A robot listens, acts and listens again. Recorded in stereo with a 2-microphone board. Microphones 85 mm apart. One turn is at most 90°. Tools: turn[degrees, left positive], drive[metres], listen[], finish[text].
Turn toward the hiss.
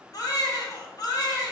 Action: listen[]
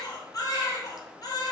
Action: listen[]
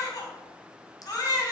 Action: finish[I can't make out a hiss, only a baby crying.]